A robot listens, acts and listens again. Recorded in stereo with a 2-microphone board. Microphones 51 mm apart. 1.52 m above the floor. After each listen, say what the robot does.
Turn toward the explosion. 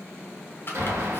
Turn 60° right.
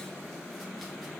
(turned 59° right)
Keep listening.
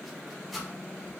I heard an explosion, but can't make it out now. It was about 5° right or 60° right.